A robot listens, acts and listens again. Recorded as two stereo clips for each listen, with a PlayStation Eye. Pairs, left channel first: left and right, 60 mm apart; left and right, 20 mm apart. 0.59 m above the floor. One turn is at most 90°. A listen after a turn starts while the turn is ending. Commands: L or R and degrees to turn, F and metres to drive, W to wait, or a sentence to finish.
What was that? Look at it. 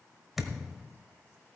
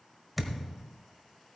R30
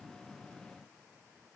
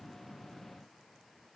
W
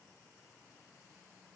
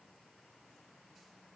I heard a thud, but can't make it out now. It was about 25° left or 145° right.